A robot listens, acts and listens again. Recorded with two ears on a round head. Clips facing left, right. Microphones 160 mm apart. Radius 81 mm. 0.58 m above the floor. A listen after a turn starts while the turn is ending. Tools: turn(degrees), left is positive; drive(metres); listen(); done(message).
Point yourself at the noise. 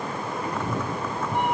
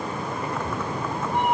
turn(degrees=75)
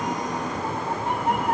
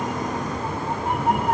turn(degrees=-10)
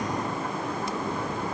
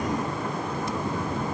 done("Found it: a cat meowing, straight ahead.")